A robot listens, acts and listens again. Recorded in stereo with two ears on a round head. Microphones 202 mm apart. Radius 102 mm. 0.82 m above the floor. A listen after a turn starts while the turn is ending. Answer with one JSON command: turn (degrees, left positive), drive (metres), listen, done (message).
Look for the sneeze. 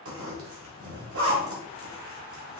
{"listen": true}
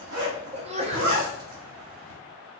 {"turn": -30}
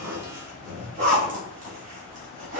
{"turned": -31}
{"listen": true}
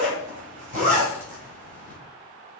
{"done": "I heard a sneeze, but can't make it out now. It was about straight ahead or 120° right."}